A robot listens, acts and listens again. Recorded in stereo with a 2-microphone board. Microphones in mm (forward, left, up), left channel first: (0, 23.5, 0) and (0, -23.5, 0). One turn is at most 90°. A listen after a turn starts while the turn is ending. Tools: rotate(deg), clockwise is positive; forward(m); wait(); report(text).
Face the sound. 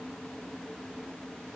wait()
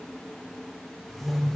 rotate(-30)
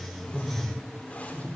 rotate(-90)
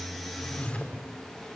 rotate(-25)
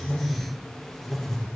report("Found it: a whoosh, straight ahead, over 4 m away.")